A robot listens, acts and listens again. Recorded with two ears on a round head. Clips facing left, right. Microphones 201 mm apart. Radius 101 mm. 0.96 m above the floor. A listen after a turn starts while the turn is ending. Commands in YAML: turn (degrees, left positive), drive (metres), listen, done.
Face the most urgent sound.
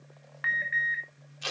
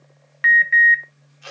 turn: -35
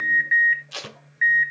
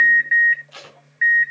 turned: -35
done: "Found it: an alarm, straight ahead."